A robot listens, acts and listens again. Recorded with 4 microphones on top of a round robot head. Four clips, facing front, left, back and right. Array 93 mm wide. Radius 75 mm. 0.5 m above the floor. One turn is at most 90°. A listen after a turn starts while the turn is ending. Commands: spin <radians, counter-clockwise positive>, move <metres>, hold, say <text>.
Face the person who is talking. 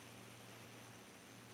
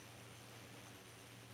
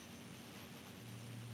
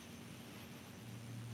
hold
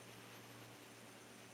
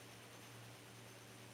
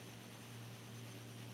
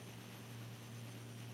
hold
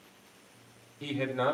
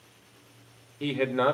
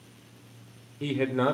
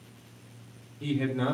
spin 1.57
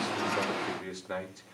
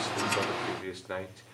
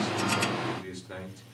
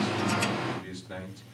spin 1.05
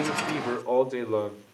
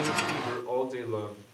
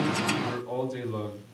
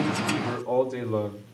spin -0.17
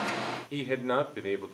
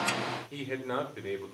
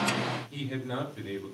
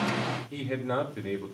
say Found it: a man speaking, straight ahead, 2 to 4 m away.